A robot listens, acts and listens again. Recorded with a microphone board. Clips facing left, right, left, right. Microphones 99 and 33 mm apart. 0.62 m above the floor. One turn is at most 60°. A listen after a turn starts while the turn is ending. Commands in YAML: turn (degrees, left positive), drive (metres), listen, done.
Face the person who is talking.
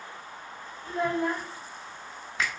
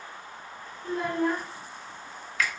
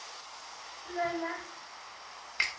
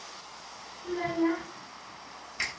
turn: -55
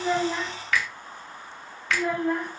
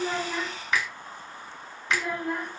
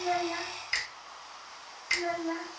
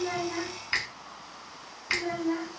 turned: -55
turn: -10
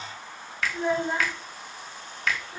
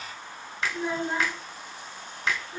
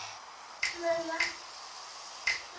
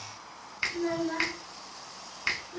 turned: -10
done: "Found it: a child speaking, straight ahead."